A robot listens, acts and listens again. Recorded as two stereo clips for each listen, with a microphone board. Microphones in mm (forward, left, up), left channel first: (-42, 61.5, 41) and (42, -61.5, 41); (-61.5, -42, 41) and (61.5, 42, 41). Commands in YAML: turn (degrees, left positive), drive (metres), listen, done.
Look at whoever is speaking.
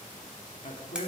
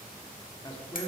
turn: 155
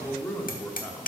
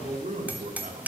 turn: 50
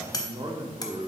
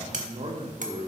done: "Facing the man speaking, 1 to 2 m away."